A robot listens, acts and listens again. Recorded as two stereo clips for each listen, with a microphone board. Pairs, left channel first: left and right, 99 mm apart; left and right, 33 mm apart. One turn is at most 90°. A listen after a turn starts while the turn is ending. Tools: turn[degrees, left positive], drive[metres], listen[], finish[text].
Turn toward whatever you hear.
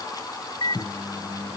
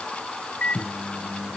Thought: The microwave: about 55° left or 125° left.
Action: turn[55]
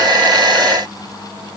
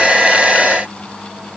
Action: finish[Found it: a microwave, straight ahead.]